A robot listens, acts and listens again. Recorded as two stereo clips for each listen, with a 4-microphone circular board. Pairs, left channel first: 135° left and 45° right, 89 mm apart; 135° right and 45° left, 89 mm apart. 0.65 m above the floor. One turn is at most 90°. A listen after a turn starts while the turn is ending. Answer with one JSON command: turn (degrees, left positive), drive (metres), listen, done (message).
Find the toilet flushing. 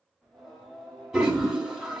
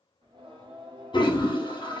{"turn": -90}
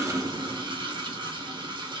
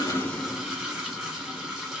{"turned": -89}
{"turn": -45}
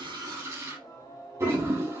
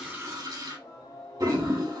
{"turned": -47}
{"done": "Facing the toilet flushing."}